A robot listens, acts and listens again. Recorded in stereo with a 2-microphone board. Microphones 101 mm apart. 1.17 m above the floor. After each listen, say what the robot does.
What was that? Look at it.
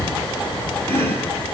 Turn 20° left.
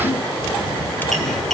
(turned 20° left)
Facing the chopping, over 4 m away.